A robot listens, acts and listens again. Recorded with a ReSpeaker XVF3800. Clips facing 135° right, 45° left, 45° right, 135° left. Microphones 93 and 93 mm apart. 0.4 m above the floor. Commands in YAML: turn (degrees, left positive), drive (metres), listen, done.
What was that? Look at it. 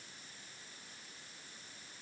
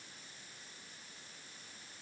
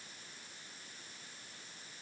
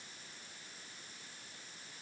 listen: true
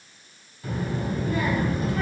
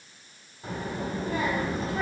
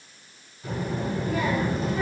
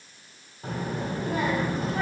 turn: 105
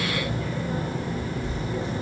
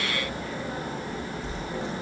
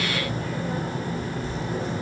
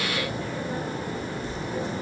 turn: -15
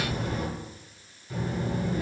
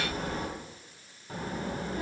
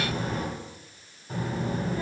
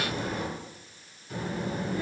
done: "Facing the child speaking."